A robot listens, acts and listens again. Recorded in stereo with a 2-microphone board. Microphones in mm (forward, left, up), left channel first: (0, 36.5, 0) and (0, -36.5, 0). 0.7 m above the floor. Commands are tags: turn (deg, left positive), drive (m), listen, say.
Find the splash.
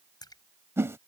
<turn deg="65"/>
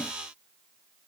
<listen/>
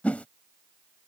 <say>I heard a splash, but can't make it out now. It was about straight ahead or 50° left.</say>